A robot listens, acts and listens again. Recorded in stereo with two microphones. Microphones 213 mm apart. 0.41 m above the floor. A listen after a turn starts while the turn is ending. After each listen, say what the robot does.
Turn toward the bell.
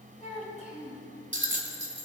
Turn 65° right.
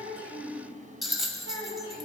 Facing the bell, 1 to 2 m away.